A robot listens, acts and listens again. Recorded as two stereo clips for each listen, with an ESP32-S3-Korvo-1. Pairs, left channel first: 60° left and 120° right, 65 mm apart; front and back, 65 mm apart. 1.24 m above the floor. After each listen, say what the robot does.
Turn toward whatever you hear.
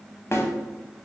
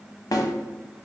Turn 15° left.
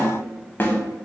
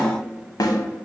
Found it: a snare drum, straight ahead, under 1 m away.